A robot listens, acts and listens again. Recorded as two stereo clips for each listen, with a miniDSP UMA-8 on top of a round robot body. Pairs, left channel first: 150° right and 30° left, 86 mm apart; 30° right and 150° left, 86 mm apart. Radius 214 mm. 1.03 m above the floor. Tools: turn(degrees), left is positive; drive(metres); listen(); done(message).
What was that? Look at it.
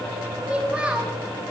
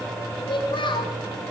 turn(degrees=-45)
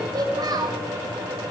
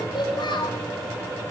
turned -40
done("Facing the child speaking.")